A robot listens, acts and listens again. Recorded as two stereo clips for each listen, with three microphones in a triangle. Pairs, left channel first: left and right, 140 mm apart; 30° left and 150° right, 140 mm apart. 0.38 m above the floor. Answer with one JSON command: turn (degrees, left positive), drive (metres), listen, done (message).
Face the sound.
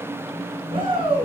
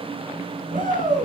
{"turn": -140}
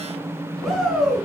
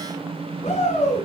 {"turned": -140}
{"done": "Found it: a shout, straight ahead."}